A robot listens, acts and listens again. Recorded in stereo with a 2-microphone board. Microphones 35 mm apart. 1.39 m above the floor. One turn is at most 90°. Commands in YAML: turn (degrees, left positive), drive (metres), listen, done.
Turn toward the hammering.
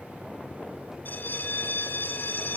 listen: true
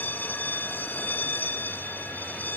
listen: true
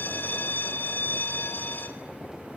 done: "I can't make out hammering to turn to."